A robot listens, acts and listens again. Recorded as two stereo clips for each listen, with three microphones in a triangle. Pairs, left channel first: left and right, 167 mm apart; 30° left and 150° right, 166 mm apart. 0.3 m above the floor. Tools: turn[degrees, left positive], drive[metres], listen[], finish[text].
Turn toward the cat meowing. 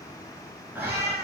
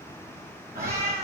Thought: The cat meowing: 75° right.
Action: turn[-75]
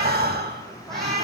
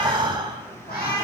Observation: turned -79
Action: finish[Facing the cat meowing.]